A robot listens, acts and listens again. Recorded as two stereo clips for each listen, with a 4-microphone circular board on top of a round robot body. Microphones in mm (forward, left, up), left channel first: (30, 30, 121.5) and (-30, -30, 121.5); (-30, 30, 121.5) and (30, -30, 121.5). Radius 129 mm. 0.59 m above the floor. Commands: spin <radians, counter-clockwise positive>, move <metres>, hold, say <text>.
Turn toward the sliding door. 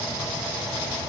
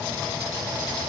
hold
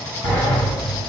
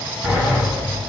spin 0.26
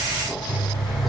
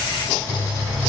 say Facing the sliding door, 1 to 2 m away.